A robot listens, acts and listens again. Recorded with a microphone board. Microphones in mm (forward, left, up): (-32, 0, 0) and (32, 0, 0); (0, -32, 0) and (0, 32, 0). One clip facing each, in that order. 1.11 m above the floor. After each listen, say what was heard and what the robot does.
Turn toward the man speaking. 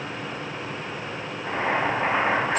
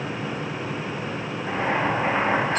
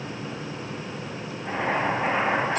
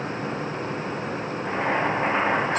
Keep listening.
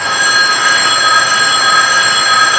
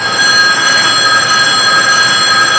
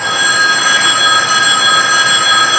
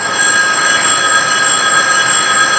Keep listening.
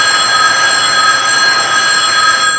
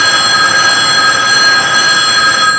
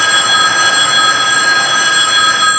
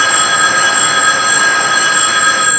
I can't make out a man speaking to turn to.